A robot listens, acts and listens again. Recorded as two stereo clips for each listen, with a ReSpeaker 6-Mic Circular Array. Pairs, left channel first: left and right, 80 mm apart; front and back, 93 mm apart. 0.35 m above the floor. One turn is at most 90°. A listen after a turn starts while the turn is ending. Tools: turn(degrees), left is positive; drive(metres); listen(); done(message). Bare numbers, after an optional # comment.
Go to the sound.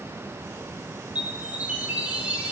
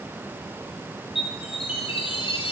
# The chime: 15° right.
turn(-15)
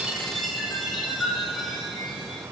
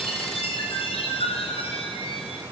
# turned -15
drive(1.0)
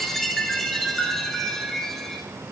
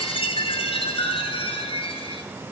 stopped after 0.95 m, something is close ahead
done("I am next to the chime.")